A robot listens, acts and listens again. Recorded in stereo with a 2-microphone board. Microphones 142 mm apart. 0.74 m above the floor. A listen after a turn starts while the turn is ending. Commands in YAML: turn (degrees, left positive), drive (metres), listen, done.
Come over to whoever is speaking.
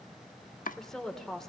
turn: 30
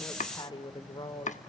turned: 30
turn: 145
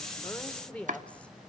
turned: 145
turn: 10
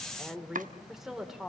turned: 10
drive: 1.0
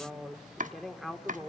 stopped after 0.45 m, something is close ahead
done: "Blocked. The woman speaking is further on, straight ahead."